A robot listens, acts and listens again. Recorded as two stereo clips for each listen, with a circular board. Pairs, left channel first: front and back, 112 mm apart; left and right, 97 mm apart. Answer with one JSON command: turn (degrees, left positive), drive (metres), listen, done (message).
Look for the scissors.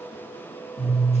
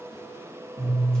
{"done": "Found it: scissors, straight ahead."}